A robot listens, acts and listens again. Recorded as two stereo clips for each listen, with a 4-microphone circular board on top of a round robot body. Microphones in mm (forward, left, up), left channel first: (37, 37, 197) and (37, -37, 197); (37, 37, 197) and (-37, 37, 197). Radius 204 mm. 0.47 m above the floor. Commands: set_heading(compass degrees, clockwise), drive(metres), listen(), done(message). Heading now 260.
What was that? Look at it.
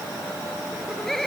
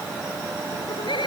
done("Found it: laughter, straight ahead.")